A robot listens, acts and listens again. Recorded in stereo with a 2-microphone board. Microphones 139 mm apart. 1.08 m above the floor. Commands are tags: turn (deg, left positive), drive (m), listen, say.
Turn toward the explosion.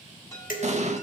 <turn deg="-55"/>
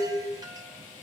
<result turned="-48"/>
<listen/>
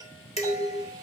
<say>I heard an explosion, but can't make it out now. It was about 5° right or 80° right.</say>